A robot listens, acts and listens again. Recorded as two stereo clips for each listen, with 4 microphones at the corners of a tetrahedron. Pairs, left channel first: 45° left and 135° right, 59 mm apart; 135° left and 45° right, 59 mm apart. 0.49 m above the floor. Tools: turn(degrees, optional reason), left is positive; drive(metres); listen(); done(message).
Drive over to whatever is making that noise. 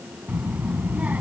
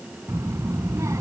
turn(degrees=-75, reason="The child speaking: 75° right.")
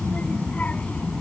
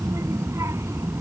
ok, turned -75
turn(degrees=-20, reason="The child speaking is now 20° right.")
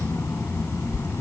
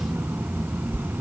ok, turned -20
drive(metres=1.0)
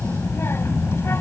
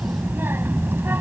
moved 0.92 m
drive(metres=1.0)
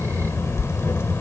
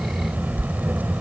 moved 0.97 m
turn(degrees=10, reason="The child speaking is now 10° left.")
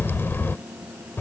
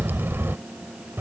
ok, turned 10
drive(metres=1.0)
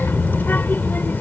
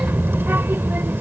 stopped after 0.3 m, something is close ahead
done("Arrived at the child speaking, straight ahead.")